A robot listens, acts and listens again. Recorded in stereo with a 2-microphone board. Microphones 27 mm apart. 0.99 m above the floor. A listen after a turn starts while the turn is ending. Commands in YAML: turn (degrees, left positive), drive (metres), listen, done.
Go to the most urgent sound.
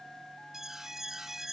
turn: -30
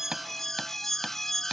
turn: 15
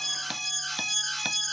drive: 1.0
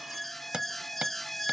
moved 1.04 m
turn: 10
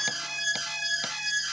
drive: 1.0
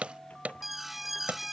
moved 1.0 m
drive: 1.0
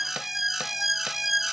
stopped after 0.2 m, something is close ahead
done: "I am next to the alarm."